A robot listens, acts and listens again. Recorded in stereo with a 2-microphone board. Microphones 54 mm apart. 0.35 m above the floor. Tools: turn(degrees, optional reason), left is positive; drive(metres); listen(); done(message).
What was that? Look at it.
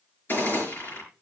turn(degrees=40, reason="The gunshot: about 40° left or 140° left.")
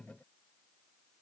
listen()
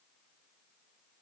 done("I heard a gunshot, but can't make it out now. It was about straight ahead or 100° left.")